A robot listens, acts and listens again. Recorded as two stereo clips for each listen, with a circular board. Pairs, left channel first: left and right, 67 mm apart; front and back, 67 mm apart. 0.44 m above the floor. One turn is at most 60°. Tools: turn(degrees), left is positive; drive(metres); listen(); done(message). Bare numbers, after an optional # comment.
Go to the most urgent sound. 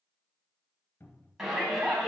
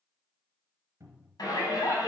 drive(1.0)
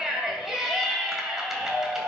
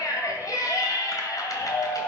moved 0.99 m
drive(1.0)
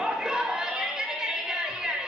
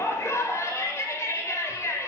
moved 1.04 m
# The shout is now 15° right.
turn(-15)
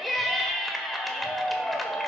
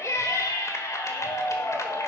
drive(1.0)
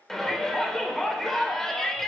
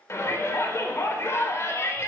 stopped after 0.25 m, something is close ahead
done("I am next to the shout.")